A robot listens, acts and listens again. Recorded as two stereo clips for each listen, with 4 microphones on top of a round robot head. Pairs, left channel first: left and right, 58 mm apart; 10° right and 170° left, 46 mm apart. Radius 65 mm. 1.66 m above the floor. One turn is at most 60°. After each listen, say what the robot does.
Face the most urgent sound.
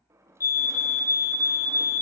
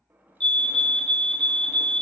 Turn 55° left.
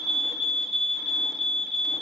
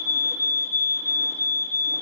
Found it: a fire alarm, straight ahead.